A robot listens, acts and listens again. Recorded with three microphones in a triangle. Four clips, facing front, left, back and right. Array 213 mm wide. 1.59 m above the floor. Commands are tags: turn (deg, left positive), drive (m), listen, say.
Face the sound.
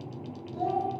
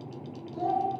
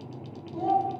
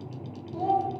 <turn deg="-80"/>
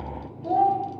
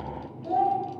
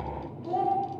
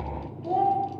<turn deg="-25"/>
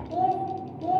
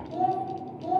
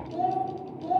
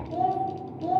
<turn deg="-45"/>
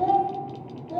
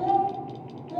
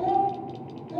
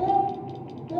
<turn deg="-50"/>
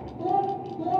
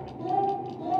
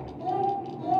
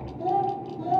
<turn deg="-35"/>
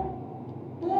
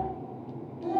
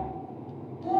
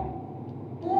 <say>Facing the child speaking, 2 to 4 m away.</say>